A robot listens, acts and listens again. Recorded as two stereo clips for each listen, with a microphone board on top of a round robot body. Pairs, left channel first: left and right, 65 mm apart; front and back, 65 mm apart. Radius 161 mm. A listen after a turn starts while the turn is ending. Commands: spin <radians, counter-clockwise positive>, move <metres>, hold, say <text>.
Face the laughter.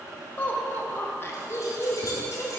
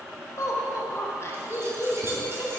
spin 1.05
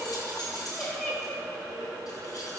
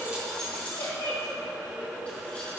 spin 0.35
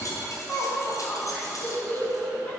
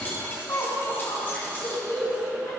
spin 0.35
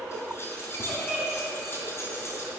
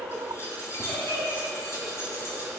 spin 0.17
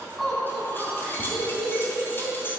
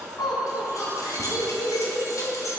say Facing the laughter.